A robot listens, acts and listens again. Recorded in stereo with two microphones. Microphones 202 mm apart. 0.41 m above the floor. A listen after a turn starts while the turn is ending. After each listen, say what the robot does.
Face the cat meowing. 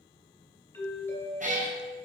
Turn 40° right.
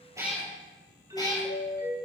Turn 20° left.
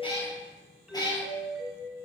Turn 20° left.
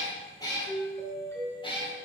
Turn 25° left.
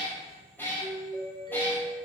Turn 10° left.
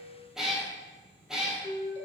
Found it: a cat meowing, straight ahead, 1 to 2 m away.